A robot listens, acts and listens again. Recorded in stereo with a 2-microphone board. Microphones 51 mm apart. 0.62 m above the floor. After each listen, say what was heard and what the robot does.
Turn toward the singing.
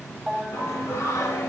The singing: about 70° left or 110° left. Turn 70° left.
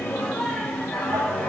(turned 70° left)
So it is at 15° left. Turn 15° left.
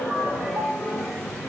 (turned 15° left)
Found it: singing, straight ahead, 2 to 4 m away.